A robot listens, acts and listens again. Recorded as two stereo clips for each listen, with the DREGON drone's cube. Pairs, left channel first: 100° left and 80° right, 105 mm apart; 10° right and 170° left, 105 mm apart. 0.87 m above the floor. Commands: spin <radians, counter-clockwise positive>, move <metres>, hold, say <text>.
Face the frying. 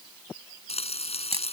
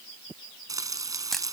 spin 1.92
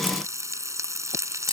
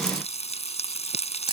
spin -0.35
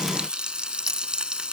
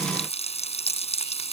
say Facing the frying.